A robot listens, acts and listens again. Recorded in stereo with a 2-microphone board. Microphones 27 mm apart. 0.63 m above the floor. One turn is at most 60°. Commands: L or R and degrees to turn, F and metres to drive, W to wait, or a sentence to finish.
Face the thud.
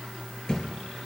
L20
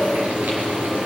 W
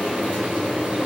I heard a thud, but can't make it out now. It was about straight ahead or 140° left.